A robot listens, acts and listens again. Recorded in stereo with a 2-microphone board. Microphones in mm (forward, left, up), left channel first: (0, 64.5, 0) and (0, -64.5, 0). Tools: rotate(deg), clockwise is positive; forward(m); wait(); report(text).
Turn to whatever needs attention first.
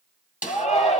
rotate(-55)
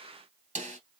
wait()
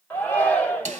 rotate(-15)
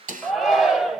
report("Found it: a shout, straight ahead.")